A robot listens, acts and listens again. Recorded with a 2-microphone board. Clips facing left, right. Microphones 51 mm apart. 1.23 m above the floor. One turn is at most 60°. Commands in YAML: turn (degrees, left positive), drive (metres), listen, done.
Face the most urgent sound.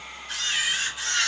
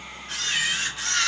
listen: true
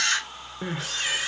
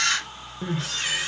turn: 20
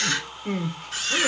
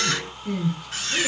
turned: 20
turn: 60
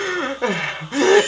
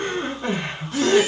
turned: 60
turn: 60
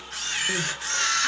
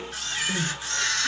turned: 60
turn: 25
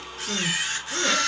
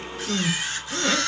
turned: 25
done: "Found it: crying, straight ahead, under 1 m away."